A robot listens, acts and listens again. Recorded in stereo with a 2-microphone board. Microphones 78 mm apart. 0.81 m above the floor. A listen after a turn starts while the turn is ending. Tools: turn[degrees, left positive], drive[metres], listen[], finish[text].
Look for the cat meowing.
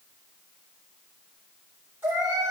Thought: The cat meowing: about 25° right or 155° right.
Action: turn[-25]
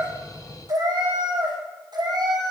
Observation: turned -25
Thought: So it is at 115° right.
Action: turn[-115]
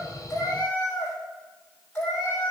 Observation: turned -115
Thought: The cat meowing is now 20° left.
Action: turn[20]
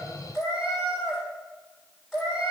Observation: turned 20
Action: finish[Found it: a cat meowing, straight ahead.]